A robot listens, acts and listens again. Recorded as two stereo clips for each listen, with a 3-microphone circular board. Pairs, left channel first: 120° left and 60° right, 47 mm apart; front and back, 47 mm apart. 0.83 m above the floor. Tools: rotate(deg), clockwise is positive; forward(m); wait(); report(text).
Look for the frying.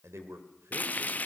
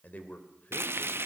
rotate(-165)
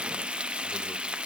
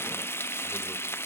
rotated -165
report("Found it: frying, straight ahead.")